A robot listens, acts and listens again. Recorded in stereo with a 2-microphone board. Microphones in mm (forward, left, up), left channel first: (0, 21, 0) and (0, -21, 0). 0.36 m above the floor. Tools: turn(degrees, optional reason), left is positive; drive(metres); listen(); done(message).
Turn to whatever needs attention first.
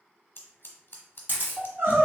turn(degrees=-65, reason="The crying: about 65° right or 115° right.")
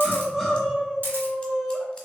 done("Facing the crying.")